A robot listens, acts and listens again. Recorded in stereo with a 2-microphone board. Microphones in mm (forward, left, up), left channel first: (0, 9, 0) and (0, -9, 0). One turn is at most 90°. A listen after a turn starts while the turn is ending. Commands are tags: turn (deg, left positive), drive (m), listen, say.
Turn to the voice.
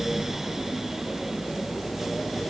<listen/>
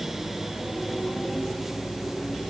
<listen/>
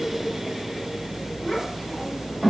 <turn deg="30"/>
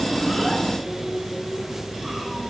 <listen/>
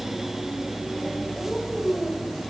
<turn deg="-25"/>
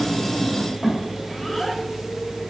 <say>Found it: a child speaking, straight ahead.</say>